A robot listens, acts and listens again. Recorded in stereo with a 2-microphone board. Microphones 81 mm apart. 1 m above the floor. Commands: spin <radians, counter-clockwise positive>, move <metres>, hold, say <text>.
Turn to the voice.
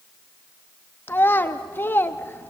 spin 0.44
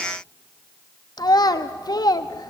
spin 2.27
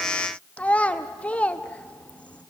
spin 0.26
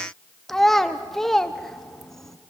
say Found it: a child speaking, straight ahead.